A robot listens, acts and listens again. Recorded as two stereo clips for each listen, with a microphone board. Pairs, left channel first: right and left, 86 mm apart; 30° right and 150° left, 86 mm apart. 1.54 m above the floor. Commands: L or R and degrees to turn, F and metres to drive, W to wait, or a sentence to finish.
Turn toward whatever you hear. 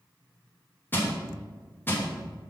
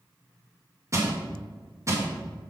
R155
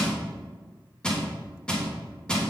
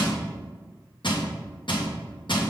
R10
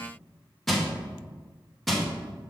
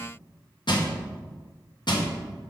Found it: crushing, straight ahead.